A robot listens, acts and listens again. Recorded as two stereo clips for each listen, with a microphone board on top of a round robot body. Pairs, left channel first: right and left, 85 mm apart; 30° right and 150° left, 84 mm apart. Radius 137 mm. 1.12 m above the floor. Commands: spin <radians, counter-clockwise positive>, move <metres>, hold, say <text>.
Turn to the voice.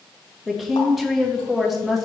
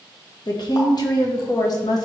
say Facing the woman speaking, 1 to 2 m away.